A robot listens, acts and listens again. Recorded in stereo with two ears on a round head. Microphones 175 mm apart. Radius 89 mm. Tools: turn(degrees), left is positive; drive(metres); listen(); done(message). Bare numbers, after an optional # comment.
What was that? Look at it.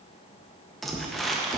turn(30)
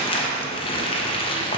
# So it is at 150° left.
turn(150)
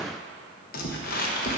# The crumpling is now 45° left.
turn(45)
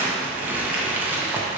# The crumpling is now 10° right.
turn(-10)
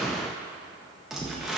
done("Facing the crumpling, under 1 m away.")